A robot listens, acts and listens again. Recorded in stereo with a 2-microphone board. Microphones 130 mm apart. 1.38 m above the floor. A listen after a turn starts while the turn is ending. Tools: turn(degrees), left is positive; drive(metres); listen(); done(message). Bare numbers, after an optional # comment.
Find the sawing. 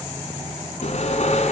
# The sawing: about 60° left or 120° left.
turn(60)
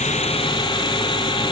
# So it is at 45° left.
turn(45)
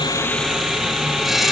done("Found it: sawing, straight ahead, 2 to 4 m away.")